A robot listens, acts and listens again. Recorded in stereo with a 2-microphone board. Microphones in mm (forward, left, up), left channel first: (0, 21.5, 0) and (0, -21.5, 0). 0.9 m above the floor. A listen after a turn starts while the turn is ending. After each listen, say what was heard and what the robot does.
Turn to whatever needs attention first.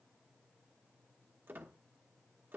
Keep listening.
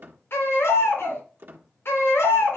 The baby crying: about 75° left or 105° left. Turn 75° left.
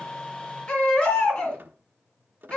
So it is at 30° left. Turn 30° left.
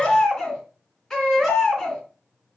The baby crying is now 15° left. Turn 15° left.
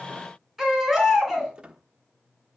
Found it: a baby crying, straight ahead.